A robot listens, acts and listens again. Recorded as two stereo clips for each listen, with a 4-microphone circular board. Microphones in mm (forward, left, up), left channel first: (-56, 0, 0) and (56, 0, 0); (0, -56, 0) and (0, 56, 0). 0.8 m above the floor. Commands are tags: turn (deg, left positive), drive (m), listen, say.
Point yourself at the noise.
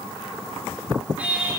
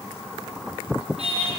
<turn deg="80"/>
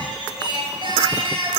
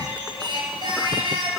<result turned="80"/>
<turn deg="45"/>
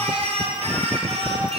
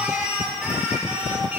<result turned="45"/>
<turn deg="10"/>
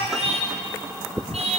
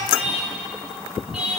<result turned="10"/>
<say>Facing the singing, over 4 m away.</say>